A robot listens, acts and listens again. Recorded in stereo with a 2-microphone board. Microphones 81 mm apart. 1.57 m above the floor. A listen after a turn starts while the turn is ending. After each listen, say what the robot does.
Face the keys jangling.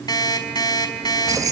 Turn 50° right.
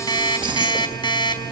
Turn 70° right.
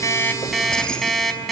Turn 10° left.
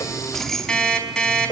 Facing the keys jangling.